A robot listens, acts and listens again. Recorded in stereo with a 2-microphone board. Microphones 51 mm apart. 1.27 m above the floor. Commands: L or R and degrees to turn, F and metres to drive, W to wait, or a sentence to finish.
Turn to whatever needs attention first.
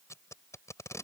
W
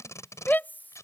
L35
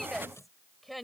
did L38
Found it: a shout, straight ahead.